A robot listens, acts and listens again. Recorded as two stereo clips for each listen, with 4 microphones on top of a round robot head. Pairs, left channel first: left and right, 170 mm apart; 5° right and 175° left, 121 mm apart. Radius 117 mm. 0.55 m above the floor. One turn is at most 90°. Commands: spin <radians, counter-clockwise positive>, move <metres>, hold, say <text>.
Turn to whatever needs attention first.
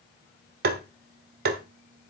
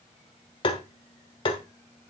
hold
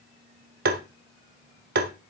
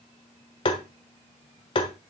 hold
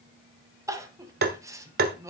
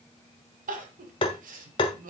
spin -1.57
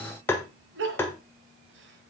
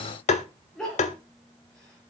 spin -1.57
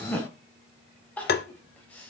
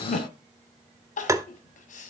say Found it: crying, straight ahead.